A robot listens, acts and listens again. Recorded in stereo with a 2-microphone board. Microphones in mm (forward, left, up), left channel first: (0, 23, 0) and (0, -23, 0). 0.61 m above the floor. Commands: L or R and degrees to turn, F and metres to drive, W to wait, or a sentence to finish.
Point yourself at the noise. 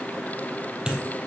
R20
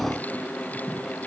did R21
W
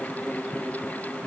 I heard a dropped coin, but can't make it out now. It was about 5° left or 140° right.